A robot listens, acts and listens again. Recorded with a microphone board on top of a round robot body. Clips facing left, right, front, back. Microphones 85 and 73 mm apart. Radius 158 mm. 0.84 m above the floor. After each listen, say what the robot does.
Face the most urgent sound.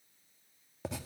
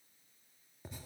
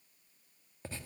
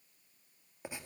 Keep listening.
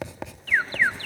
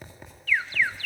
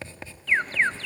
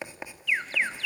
Turn 40° left.
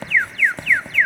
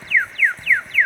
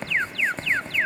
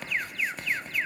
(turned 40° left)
Found it: an alarm, straight ahead.